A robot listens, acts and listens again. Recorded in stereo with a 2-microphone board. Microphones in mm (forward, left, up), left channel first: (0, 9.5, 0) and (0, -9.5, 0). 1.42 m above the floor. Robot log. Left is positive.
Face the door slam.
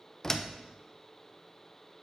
note: The door slam: about 25° left or 155° left.
cmd yaw +25
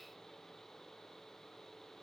cmd idle
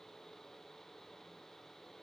end: I heard a door slam, but can't make it out now. It was about straight ahead or 130° left.